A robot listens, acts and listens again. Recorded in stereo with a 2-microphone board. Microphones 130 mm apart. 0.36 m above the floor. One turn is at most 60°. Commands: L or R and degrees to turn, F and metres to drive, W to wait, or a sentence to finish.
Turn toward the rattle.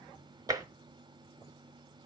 W
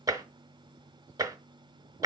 W
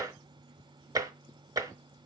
I can't make out a rattle, only tapping.